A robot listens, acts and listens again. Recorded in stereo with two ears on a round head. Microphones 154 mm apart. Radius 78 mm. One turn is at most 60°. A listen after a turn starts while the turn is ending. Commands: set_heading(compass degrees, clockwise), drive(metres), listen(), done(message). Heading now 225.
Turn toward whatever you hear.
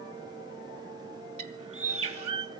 set_heading(260)
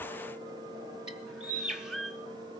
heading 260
done("Facing the bird, under 1 m away.")